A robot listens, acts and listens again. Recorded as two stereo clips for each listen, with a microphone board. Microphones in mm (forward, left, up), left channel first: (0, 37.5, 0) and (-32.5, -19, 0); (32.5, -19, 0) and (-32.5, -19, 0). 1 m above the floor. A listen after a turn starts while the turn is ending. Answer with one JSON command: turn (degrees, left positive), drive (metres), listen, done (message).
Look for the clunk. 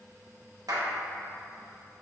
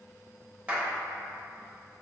{"listen": true}
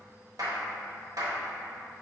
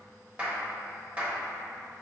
{"listen": true}
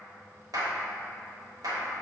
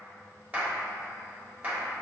{"done": "I can't make out a clunk to turn to."}